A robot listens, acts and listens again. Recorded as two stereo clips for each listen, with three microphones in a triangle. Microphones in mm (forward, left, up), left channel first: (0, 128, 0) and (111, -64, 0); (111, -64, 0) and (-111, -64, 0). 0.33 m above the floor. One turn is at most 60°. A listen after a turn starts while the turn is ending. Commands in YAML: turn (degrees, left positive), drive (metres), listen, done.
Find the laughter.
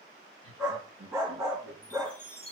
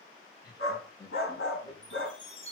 turn: -60
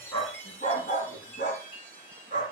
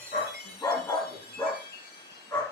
turn: -10
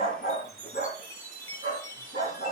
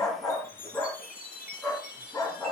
listen: true
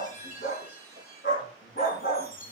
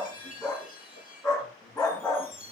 done: "I heard laughter from this way, but can't make it out now."